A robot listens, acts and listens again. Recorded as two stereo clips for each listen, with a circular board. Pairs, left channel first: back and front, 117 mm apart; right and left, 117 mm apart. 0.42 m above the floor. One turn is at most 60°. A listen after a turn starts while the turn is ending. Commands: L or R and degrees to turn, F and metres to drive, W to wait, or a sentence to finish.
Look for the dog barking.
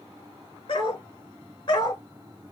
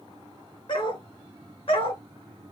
R60
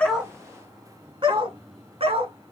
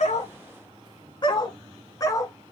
R30
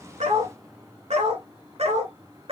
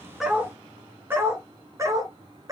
L30
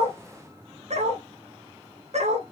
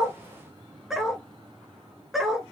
Found it: a dog barking, straight ahead, 1 to 2 m away.